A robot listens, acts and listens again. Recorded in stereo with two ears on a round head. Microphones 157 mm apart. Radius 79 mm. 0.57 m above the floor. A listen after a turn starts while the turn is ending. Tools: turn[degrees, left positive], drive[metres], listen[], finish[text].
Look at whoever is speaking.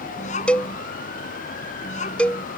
Thought: The child speaking: about 45° left or 135° left.
Action: turn[45]
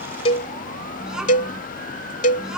Action: finish[Found it: a child speaking, straight ahead.]